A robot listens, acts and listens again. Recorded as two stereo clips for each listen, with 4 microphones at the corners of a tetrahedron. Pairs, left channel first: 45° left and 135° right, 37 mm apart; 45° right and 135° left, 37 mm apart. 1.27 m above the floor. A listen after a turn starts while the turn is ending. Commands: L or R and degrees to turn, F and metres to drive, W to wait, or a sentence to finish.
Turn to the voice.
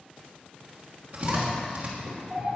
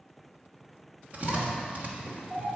L135
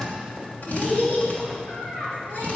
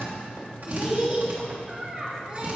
L60
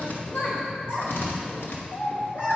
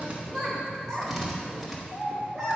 L25
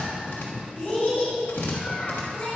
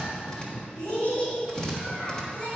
Facing the child speaking, 2 to 4 m away.